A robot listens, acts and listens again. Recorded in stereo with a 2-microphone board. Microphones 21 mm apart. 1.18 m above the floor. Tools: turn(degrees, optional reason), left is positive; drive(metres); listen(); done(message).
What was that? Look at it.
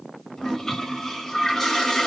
turn(degrees=25, reason="The toilet flushing: about 25° left or 155° left.")
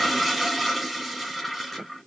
done("Facing the toilet flushing, 1 to 2 m away.")